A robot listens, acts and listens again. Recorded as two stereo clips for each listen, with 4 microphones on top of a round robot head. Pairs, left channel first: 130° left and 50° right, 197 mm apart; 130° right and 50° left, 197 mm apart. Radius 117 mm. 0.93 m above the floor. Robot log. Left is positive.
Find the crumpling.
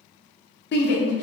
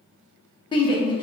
cmd idle
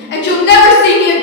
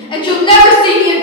cmd idle
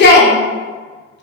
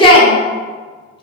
end: I can't make out crumpling, only a shout.